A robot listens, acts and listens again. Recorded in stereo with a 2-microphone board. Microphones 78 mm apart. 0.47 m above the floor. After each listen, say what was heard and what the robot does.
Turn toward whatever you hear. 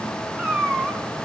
Turn 30° right.
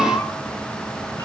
So it is at 30° left. Turn 30° left.
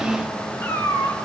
The cat meowing is now 30° left. Turn 30° left.
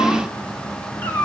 The cat meowing is now 25° left. Turn 25° left.
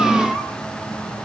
Found it: a cat meowing, straight ahead, 2 to 4 m away.